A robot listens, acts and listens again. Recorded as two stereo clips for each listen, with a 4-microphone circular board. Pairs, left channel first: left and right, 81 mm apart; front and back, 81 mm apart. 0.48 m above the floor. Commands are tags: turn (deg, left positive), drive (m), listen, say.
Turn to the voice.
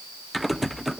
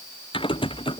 <listen/>
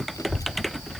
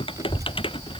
<turn deg="140"/>
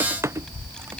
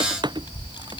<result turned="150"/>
<turn deg="10"/>
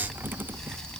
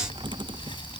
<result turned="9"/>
<turn deg="10"/>
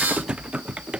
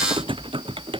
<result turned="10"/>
<listen/>
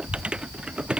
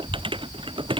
<say>Found it: a child speaking, straight ahead.</say>